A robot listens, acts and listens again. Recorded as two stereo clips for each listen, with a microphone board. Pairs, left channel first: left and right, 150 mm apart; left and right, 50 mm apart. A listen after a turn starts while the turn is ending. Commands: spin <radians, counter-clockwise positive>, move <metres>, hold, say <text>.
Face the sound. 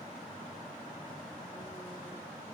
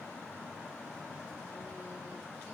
hold
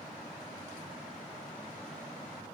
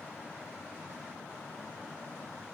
hold
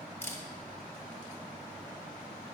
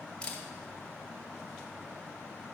spin 0.26
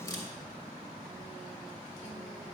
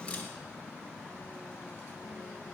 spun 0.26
hold
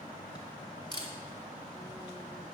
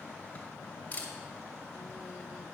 spin 2.62
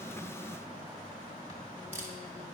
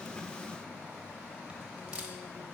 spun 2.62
spin -0.26
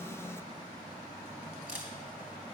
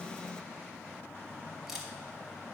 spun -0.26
say Found it: a camera shutter, straight ahead.